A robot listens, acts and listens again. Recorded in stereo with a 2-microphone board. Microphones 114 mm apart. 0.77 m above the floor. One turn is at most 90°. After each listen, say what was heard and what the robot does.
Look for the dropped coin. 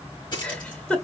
The dropped coin: about 45° left or 135° left. Turn 45° left.
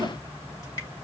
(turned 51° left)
Keep listening.
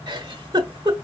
I heard a dropped coin, but can't make it out now. It was about 10° right or 85° left.